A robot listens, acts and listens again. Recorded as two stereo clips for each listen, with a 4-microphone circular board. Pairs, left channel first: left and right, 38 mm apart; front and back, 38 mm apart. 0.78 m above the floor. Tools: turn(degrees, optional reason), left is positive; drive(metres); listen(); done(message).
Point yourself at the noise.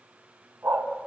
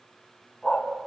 turn(degrees=-75, reason="The dog barking: 75° right.")
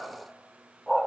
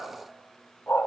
done("Found it: a dog barking, straight ahead.")